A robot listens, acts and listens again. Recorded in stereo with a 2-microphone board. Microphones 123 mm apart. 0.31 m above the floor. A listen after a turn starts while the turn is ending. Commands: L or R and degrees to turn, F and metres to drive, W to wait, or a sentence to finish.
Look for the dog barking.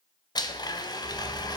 L30
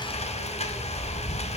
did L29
L145
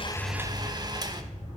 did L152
R10
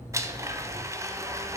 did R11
Found it: a dog barking, straight ahead, over 4 m away.